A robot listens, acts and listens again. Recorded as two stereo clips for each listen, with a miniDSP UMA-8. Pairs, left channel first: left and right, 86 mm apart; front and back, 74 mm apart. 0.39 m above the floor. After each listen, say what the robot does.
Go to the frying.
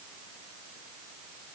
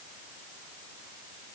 Keep listening.
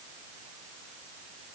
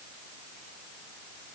Keep listening.
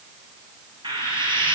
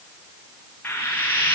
Turn 65° right.
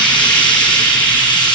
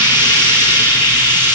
Turn 15° left.
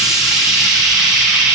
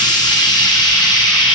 Drive 1.0 m forward.
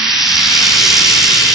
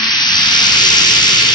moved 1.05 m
Drive 1.0 m forward.
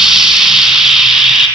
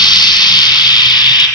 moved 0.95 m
Drive 1.0 m forward.
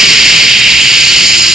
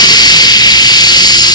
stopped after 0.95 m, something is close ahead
Arrived at the frying, straight ahead.